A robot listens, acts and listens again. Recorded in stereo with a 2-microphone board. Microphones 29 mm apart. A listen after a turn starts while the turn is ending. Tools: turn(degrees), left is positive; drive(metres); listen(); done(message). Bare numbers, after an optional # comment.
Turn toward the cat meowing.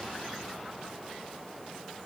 listen()
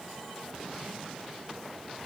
listen()
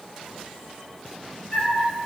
# The cat meowing: about 35° left or 145° left.
turn(35)
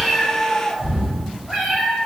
done("Found it: a cat meowing, straight ahead.")